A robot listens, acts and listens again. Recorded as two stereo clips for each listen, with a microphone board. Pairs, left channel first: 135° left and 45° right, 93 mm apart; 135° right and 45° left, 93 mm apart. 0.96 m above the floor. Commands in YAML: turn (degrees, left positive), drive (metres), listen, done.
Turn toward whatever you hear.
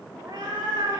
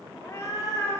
turn: -80
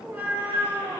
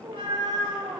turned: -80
turn: 25
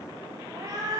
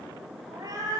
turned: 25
done: "Found it: a cat meowing, straight ahead, 1 to 2 m away."